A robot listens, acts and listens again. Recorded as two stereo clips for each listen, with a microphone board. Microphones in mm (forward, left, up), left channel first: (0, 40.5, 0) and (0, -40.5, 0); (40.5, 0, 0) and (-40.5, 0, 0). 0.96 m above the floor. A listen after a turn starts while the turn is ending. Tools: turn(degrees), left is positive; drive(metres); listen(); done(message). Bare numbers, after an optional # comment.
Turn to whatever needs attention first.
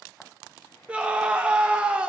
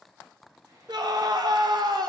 # The scream: 165° right.
turn(-165)
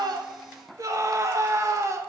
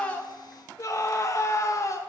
# The scream is now 45° right.
turn(-45)
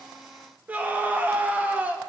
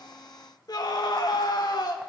# The scream is now 20° right.
turn(-20)
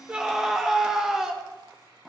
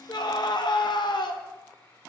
done("Found it: a scream, straight ahead, under 1 m away.")